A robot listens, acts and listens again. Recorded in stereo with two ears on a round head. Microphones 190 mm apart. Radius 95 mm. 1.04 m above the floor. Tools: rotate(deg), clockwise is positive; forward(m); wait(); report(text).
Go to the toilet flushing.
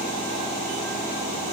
wait()
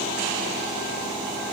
wait()
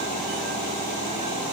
report("I can't make out a toilet flushing to turn to.")